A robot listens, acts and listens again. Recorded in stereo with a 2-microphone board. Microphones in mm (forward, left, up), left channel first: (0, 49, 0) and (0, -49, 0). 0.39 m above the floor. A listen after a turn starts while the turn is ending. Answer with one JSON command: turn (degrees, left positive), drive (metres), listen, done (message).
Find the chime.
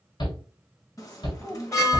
{"turn": 35}
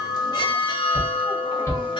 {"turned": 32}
{"turn": 105}
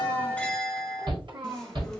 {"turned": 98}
{"done": "Found it: a chime, straight ahead, 1 to 2 m away."}